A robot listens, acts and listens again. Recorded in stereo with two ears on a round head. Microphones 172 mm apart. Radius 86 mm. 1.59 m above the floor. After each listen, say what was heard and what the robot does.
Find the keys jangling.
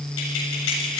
Turn 90° left.
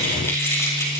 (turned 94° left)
So it is at 15° left. Turn 15° left.
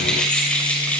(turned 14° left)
The keys jangling is now 10° left. Turn 10° left.
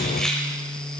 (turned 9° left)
Keep listening.
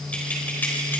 The keys jangling is now 10° left. Turn 10° left.
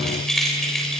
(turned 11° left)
Found it: keys jangling, straight ahead.